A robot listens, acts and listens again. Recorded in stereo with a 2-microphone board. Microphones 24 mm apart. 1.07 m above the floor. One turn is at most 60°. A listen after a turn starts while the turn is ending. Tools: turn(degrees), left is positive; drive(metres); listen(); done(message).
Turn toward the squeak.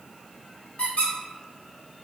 turn(degrees=55)
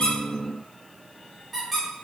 done("Found it: a squeak, straight ahead.")